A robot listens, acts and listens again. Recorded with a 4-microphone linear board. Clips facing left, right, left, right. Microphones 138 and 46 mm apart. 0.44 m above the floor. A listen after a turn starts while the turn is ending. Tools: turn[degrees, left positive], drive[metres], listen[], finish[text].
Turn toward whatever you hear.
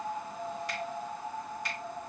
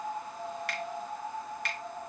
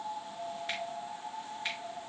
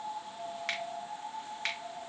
Thought: The finger snap: about 70° right or 110° right.
Action: turn[-70]
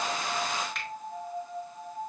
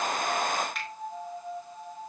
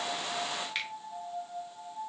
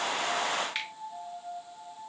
Action: finish[Facing the finger snap.]